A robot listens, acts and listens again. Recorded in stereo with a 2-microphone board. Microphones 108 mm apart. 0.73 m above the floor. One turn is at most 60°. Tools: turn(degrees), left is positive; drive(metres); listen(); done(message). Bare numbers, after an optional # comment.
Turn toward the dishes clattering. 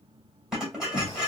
turn(-30)
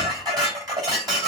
# So it is at 145° right.
turn(-60)
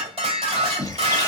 # The dishes clattering is now 80° right.
turn(-60)
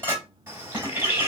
# The dishes clattering is now 20° right.
turn(-20)
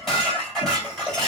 done("Found it: dishes clattering, straight ahead, 2 to 4 m away.")